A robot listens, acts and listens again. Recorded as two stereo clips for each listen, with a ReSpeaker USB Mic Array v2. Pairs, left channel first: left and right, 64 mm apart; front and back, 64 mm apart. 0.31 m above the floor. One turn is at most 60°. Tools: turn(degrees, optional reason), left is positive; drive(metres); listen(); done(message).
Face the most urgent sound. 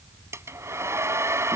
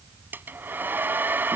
listen()
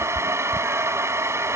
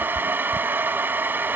listen()
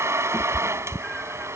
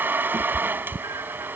done("I can't make out anything urgent, only a cat meowing and a hair dryer.")